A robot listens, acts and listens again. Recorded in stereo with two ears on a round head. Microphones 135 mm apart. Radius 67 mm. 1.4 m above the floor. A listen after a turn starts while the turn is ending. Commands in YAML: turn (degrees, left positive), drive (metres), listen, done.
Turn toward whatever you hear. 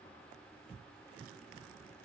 listen: true
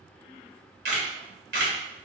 turn: -90
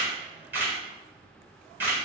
turn: -15
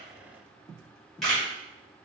done: "Facing the camera shutter, 1 to 2 m away."